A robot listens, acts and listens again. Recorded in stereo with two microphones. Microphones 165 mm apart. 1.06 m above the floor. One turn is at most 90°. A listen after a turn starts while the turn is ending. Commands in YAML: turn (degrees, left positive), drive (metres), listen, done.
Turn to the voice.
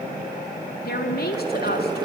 turn: 70
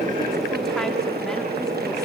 listen: true
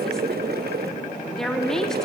done: "Found it: a woman speaking, straight ahead."